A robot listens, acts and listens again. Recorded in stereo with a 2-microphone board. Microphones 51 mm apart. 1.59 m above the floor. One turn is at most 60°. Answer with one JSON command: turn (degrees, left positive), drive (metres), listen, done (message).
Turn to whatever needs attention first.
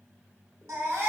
{"turn": -60}
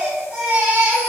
{"turn": -25}
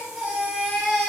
{"turn": -10}
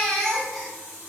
{"done": "Facing the baby crying, 1 to 2 m away."}